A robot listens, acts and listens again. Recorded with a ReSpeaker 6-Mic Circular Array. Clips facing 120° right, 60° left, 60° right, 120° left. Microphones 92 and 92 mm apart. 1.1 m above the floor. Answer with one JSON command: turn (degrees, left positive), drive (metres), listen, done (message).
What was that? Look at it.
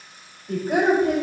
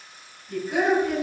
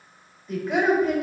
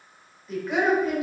{"turn": -150}
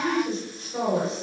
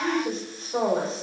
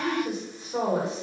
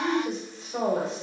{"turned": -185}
{"turn": 10}
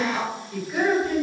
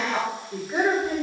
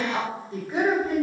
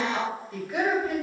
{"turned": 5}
{"done": "Found it: a woman speaking, straight ahead."}